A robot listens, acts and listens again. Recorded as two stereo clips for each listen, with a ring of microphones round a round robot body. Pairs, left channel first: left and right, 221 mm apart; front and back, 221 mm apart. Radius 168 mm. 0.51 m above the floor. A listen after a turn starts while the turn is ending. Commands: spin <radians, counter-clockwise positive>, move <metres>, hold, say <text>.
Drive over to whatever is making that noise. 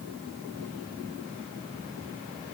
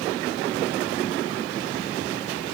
hold
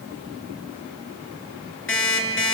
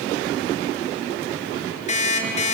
spin 1.05
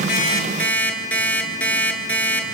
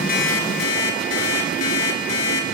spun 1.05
move 1.0
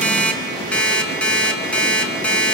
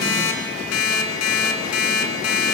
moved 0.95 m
move 1.0
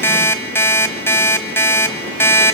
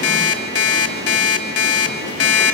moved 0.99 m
spin 0.17
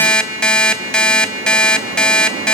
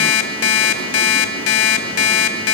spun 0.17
move 1.0
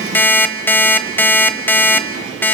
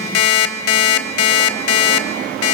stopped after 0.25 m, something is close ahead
spin 0.17
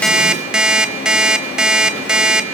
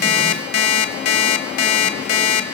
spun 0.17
say I am next to the alarm clock.